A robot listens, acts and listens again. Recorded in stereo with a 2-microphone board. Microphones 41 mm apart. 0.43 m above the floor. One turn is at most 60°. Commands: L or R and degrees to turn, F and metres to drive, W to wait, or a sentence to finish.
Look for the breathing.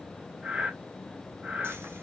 R35
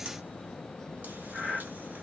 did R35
Facing the breathing, 2 to 4 m away.